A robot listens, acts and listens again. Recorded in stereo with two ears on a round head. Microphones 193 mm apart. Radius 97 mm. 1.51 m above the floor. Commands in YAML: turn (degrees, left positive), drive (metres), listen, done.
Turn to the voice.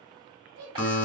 turn: -60
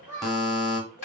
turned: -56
turn: -10
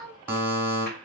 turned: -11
done: "Facing the child speaking, 1 to 2 m away."